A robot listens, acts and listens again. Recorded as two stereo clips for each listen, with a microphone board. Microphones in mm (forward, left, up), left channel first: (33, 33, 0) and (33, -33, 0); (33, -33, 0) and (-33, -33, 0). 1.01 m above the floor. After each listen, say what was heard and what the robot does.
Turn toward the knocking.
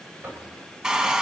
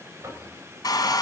The knocking: 145° right. Turn 145° right.
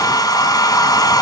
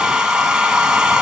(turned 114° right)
Nothing new. It was at 30° right. Turn 30° right.
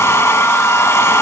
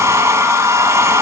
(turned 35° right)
Keep listening.
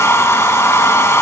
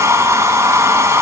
I heard knocking from this way, but can't make it out now.